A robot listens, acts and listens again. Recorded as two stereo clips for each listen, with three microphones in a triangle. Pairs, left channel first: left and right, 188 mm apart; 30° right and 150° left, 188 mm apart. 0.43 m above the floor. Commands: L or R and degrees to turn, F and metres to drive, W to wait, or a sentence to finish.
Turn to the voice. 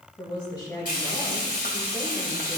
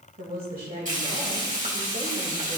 L155
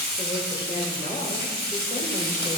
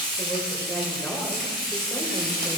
L50
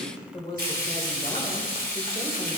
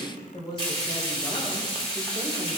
L30
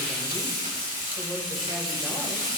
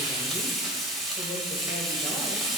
W
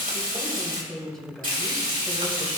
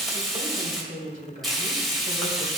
Found it: a woman speaking, straight ahead.